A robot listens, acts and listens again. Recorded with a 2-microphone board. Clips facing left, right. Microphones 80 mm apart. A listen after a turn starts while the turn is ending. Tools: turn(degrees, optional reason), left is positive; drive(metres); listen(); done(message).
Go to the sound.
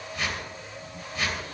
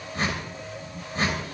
turn(degrees=-40, reason="The whoosh: about 40° right or 140° right.")
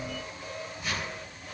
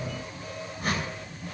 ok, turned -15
turn(degrees=-130, reason="So it is at 130° right.")
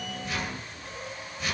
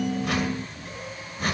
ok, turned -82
turn(degrees=-45, reason="The whoosh is now 45° right.")
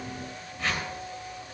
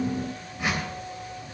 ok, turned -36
turn(degrees=-10, reason="The whoosh is now 10° right.")
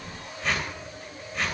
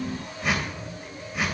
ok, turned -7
drive(metres=1.0)
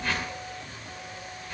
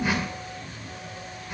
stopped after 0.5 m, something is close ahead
turn(degrees=-10, reason="The whoosh is now 10° right.")
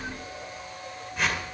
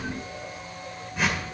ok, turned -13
done("Blocked. The whoosh is further on, straight ahead.")